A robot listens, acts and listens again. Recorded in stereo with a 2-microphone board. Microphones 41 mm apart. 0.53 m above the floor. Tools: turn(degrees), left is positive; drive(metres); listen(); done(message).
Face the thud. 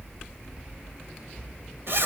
listen()
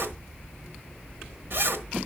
listen()
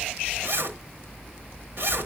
done("I can't make out a thud, only a zipper.")